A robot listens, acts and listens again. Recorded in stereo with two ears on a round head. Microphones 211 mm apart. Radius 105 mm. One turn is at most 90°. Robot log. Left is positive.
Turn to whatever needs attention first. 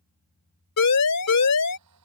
note: The siren: about 75° left or 105° left.
cmd yaw +75
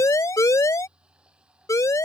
note: So it is at 15° left.
cmd yaw +15
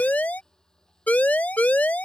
end: Found it: a siren, straight ahead.